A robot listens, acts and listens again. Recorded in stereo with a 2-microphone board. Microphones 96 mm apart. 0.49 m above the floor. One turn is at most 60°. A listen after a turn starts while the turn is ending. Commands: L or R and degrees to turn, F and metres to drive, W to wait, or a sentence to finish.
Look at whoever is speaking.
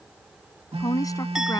L35
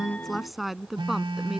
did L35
Found it: a woman speaking, straight ahead.